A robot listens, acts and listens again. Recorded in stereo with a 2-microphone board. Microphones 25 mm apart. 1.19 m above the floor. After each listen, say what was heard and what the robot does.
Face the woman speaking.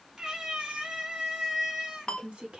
The woman speaking: about 45° right or 135° right. Turn 45° right.
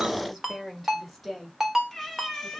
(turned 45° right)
Found it: a woman speaking, straight ahead, 2 to 4 m away.